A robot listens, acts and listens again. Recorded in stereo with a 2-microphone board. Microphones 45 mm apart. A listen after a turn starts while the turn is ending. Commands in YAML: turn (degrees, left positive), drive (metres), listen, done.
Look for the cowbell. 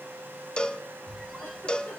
turn: 20
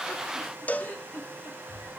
turn: 135
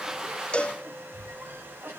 turn: 30
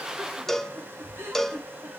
turn: 10
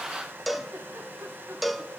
done: "Facing the cowbell, under 1 m away."